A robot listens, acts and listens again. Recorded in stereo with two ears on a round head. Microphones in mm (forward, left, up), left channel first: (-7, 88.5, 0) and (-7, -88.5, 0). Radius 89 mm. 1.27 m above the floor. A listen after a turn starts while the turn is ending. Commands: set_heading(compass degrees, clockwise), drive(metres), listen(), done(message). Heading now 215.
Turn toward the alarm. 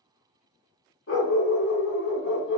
listen()
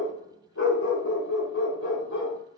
listen()
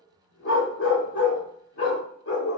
done("I can't make out an alarm to turn to.")